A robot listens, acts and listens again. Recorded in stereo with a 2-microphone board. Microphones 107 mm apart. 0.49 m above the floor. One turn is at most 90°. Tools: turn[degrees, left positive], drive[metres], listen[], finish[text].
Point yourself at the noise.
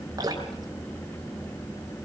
Thought: The dripping: about 35° right or 145° right.
Action: turn[-35]
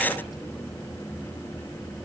Action: listen[]
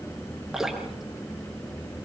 Action: finish[Facing the dripping.]